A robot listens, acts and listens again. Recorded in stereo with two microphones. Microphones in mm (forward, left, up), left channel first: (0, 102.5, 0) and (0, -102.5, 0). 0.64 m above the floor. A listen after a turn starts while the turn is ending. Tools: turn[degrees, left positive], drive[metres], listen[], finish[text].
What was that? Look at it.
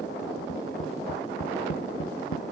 Action: turn[90]
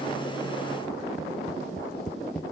Action: finish[Facing the tapping.]